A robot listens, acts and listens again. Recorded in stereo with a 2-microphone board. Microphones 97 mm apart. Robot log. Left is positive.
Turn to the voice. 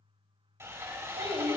note: The child speaking: about 65° right or 115° right.
cmd yaw -65
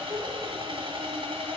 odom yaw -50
note: So it is at 20° right.
cmd yaw -20
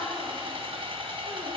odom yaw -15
cmd idle
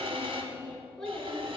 note: The child speaking is now 10° left.
cmd yaw +10
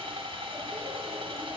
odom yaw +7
cmd idle
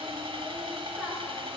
end: Facing the child speaking, over 4 m away.